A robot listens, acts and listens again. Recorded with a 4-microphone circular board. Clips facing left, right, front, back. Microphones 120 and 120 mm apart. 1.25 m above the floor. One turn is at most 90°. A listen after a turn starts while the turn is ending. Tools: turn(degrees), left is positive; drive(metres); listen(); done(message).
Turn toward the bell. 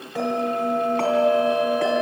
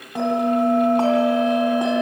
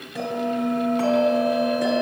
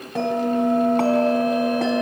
turn(degrees=-90)
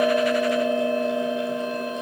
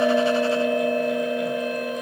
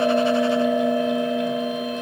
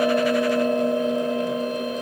turn(degrees=-60)
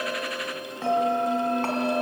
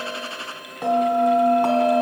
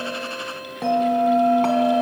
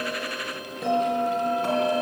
turn(degrees=-15)
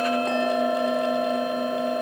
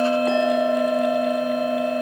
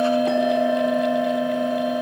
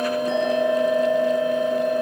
done("Found it: a bell, straight ahead.")